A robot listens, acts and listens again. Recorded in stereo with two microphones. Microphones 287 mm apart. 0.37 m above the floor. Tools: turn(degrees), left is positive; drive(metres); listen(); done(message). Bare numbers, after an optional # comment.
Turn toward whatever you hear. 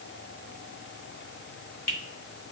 # The finger snap: about 55° left or 125° left.
turn(55)
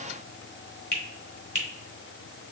# So it is at 45° left.
turn(45)
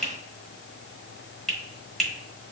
done("Found it: a finger snap, straight ahead.")